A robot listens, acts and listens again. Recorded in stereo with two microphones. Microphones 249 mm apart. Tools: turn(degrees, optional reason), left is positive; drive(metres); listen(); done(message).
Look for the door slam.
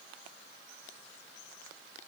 listen()
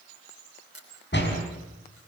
turn(degrees=45, reason="The door slam: about 45° left or 135° left.")
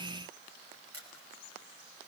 listen()
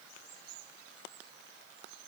done("I heard a door slam, but can't make it out now. It was about straight ahead or 90° left.")